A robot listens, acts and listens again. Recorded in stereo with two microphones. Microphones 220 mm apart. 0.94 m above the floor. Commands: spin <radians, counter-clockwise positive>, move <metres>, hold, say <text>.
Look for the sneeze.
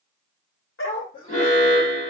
spin 0.70
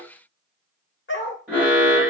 hold
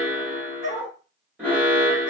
say I heard a sneeze, but can't make it out now. It was about straight ahead or 100° left.